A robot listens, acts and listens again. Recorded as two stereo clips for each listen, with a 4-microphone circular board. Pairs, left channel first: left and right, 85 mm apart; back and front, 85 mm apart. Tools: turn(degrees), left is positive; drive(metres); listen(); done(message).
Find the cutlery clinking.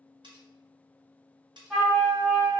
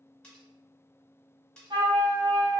turn(degrees=-105)
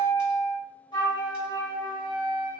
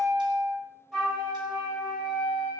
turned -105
listen()
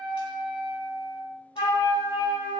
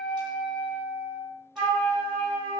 listen()
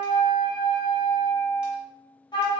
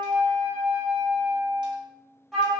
done("Facing where the cutlery clinking came from. I can't hear it now.")